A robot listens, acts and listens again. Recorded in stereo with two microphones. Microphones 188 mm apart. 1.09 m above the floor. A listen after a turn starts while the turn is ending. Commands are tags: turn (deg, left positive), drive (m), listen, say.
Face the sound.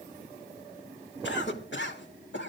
<turn deg="90"/>
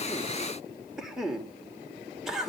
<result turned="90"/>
<say>Facing the cough, 2 to 4 m away.</say>